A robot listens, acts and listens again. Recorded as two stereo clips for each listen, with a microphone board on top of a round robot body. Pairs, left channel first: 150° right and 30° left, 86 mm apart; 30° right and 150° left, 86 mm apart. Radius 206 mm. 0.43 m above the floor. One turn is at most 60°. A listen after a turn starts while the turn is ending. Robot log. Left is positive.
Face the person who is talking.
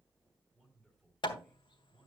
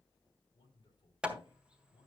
note: The man speaking: 60° right.
cmd yaw -60
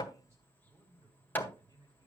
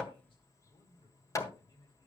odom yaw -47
note: The man speaking is now 15° right.
cmd yaw -15
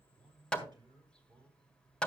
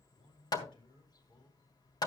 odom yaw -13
end: Found it: a man speaking, straight ahead.